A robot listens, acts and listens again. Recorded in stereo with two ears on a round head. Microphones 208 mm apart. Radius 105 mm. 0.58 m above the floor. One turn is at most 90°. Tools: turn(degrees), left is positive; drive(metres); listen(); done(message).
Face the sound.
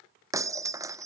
turn(degrees=-30)
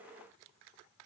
listen()
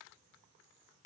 done("I heard breaking glass, but can't make it out now. It was about 15° left or 135° right.")